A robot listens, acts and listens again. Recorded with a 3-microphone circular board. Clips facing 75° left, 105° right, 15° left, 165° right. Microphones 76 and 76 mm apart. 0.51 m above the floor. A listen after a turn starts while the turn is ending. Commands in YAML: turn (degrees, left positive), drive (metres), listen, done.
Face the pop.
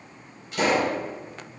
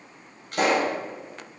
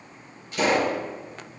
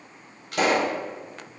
turn: -140
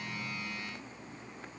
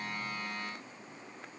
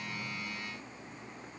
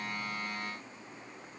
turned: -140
done: "Facing where the pop came from. I can't hear it now."